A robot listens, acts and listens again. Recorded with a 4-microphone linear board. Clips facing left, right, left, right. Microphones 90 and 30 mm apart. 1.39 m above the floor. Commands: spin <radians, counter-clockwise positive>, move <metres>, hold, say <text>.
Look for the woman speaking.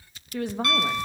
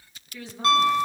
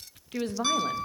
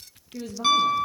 spin 1.05
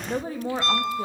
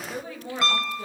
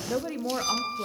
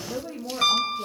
spin 0.61
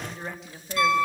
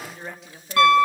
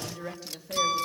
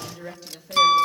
say Facing the woman speaking, 2 to 4 m away.